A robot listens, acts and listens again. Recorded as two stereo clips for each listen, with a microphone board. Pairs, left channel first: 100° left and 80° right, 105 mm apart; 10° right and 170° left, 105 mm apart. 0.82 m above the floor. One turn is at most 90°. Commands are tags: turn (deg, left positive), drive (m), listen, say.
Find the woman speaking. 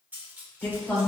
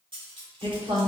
<turn deg="90"/>
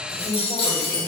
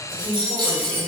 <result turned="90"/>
<turn deg="90"/>
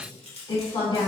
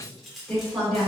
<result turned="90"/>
<turn deg="75"/>
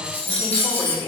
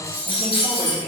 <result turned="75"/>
<turn deg="25"/>
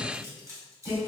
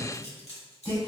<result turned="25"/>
<turn deg="-15"/>
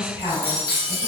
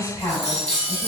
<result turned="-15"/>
<say>Facing the woman speaking.</say>